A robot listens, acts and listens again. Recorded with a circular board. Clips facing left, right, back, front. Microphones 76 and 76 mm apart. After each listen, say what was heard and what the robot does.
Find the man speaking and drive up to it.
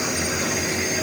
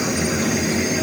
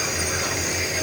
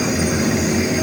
Keep listening.
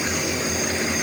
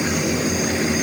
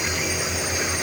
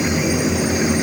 Keep listening.
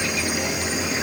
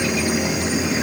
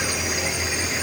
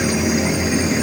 I can't make out a man speaking.